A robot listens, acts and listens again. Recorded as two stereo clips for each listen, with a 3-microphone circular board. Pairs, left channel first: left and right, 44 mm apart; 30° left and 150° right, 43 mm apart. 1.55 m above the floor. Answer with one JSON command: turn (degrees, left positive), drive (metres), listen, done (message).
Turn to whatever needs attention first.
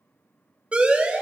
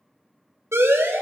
{"turn": -155}
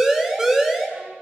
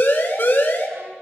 {"turn": -10}
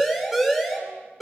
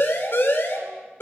{"done": "Found it: a siren, straight ahead."}